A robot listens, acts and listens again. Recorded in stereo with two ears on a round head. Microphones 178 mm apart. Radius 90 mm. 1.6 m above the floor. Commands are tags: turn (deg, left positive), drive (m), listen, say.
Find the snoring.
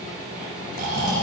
<turn deg="-40"/>
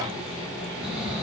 <say>Facing the snoring, over 4 m away.</say>